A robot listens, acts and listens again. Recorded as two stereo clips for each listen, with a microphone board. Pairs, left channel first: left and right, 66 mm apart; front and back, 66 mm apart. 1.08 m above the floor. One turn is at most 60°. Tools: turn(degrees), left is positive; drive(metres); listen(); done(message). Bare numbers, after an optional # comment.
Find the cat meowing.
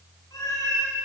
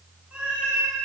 # The cat meowing: 105° left.
turn(60)
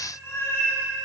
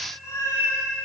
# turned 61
# The cat meowing is now 40° left.
turn(40)
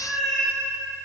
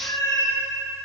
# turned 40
done("Facing the cat meowing.")